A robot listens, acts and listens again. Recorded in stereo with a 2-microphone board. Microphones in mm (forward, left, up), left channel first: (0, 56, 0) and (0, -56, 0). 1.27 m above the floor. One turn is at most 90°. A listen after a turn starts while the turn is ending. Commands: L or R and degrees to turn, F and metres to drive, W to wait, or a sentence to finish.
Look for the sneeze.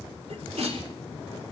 R70
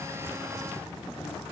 W
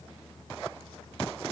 I heard a sneeze, but can't make it out now. It was about straight ahead or 40° right.